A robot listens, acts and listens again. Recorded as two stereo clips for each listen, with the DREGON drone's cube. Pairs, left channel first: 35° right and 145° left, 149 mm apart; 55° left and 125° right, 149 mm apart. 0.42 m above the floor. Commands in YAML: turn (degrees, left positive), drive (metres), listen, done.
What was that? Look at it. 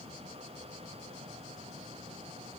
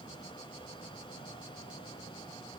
listen: true
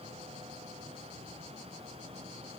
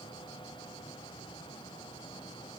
listen: true
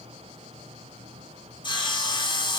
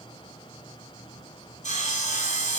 turn: 20
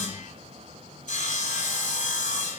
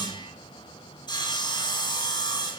done: "Found it: sawing, straight ahead, 1 to 2 m away."